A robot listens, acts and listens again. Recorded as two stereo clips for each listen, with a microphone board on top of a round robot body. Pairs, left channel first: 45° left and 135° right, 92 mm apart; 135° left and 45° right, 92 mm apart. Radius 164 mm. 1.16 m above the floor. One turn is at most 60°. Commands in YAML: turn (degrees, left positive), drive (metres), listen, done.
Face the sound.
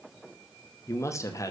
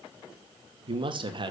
turn: -10
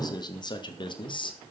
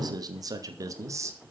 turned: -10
turn: 15
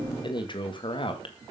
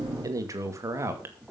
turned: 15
turn: 20
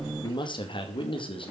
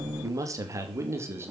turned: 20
turn: 20
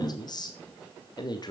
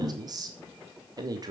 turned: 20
done: "Found it: a man speaking, straight ahead, 2 to 4 m away."